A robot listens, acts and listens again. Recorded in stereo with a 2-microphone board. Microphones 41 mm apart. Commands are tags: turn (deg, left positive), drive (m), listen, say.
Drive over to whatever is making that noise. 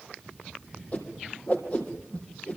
<turn deg="35"/>
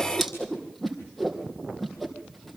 <drive m="1.0"/>
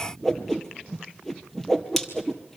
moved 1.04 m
<drive m="1.0"/>
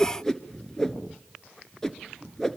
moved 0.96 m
<turn deg="10"/>
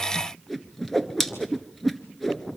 <drive m="1.0"/>
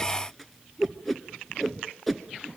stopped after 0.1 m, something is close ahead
<say>I am next to the whoosh.</say>